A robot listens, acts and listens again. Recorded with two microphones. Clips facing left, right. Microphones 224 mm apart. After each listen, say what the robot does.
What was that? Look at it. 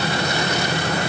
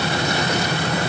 Keep listening.
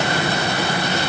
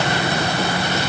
Keep listening.
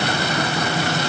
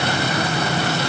I can't make out anything to turn to.